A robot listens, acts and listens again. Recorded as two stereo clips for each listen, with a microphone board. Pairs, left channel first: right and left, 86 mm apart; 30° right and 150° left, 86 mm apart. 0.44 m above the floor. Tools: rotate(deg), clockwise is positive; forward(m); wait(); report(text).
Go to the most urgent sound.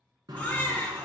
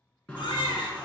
rotate(20)
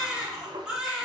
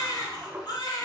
forward(1.0)
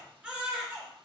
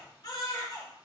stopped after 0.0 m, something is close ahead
rotate(-10)
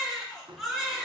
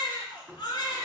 report("Blocked. The baby crying is further on, straight ahead.")